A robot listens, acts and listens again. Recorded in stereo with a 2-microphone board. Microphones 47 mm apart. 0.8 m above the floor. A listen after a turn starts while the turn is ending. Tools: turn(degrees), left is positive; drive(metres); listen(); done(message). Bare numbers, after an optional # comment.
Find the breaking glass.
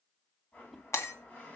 turn(90)
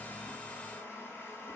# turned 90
done("Facing where the breaking glass came from. I can't hear it now.")